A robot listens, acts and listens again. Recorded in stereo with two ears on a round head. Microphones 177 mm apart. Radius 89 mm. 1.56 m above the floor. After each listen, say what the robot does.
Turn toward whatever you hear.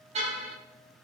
Turn 35° right.
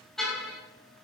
Facing the car horn, over 4 m away.